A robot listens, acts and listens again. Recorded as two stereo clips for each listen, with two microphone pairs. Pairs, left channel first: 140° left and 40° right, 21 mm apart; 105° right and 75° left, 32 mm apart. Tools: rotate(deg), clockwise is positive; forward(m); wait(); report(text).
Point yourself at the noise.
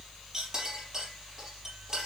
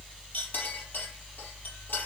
rotate(100)
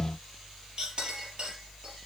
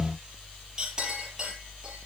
rotate(-10)
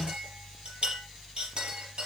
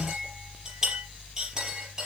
report("Found it: a clink, straight ahead, over 4 m away.")